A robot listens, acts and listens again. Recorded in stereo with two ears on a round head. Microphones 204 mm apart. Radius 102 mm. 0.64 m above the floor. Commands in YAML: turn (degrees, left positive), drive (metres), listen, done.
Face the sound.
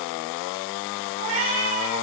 turn: -50
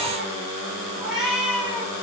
done: "Found it: a cat meowing, straight ahead."